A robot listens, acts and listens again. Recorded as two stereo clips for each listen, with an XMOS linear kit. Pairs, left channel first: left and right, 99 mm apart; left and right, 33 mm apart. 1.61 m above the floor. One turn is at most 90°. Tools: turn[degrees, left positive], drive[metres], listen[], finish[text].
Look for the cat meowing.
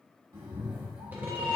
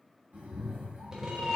Thought: The cat meowing: about 55° right or 125° right.
Action: turn[-55]
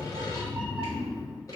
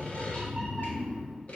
Action: finish[Found it: a cat meowing, straight ahead.]